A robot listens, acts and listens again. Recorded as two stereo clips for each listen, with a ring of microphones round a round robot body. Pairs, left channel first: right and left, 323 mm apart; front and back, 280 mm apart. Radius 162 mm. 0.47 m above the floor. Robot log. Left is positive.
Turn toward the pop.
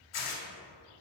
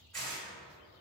cmd idle
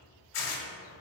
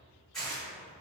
cmd idle
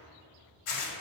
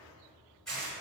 end: I can't make out a pop, only tearing paper.